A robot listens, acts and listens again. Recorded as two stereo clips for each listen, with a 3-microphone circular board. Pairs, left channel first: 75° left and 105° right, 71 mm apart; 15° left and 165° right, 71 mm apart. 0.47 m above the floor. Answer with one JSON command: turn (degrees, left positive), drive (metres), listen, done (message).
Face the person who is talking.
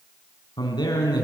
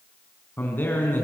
{"turn": 75}
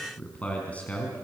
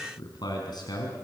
{"done": "Facing the man speaking, over 4 m away."}